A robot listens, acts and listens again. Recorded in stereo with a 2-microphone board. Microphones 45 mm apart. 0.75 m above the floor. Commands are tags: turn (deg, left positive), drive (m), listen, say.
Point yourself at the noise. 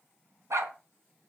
<turn deg="-90"/>
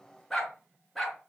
<say>Found it: a dog barking, straight ahead.</say>